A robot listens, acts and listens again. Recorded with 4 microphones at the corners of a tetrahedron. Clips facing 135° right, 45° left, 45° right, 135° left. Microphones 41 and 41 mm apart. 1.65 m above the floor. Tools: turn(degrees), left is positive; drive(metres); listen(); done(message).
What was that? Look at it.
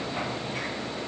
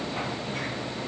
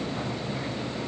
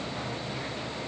listen()
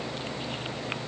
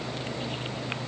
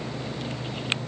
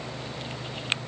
listen()
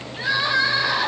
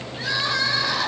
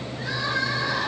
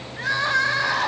turn(degrees=155)
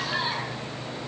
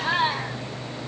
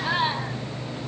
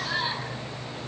done("Found it: crying, straight ahead.")